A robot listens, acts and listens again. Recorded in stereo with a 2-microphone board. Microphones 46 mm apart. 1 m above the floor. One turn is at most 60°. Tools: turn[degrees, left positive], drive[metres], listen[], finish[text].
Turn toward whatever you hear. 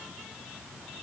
Action: listen[]
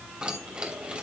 Thought: The keys jangling: about 25° right or 155° right.
Action: turn[-25]
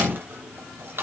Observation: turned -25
Thought: So it is at 120° right.
Action: turn[-60]
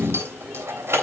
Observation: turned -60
Thought: The keys jangling is now 70° right.
Action: turn[-60]
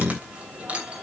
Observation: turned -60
Thought: The keys jangling is now 25° right.
Action: turn[-25]
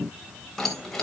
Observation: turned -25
Action: finish[Facing the keys jangling, 2 to 4 m away.]